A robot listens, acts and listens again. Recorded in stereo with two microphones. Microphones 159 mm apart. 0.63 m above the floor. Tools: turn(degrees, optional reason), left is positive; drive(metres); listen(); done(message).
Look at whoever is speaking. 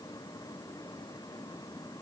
listen()
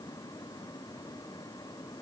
listen()
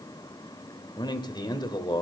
turn(degrees=30, reason="The man speaking: about 30° left or 150° left.")
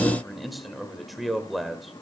done("Facing the man speaking.")